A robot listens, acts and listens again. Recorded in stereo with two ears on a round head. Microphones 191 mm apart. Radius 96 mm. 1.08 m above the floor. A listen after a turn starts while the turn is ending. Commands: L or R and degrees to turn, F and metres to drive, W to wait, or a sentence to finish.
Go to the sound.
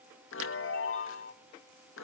L65
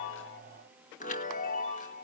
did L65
L40
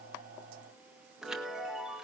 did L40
F1.0
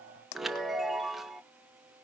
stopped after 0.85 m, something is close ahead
I am next to the chime.